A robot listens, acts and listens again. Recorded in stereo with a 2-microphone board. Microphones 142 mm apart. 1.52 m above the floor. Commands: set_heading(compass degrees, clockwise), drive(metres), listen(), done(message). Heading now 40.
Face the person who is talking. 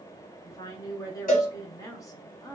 set_heading(15)
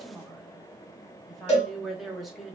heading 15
done("Found it: a woman speaking, straight ahead.")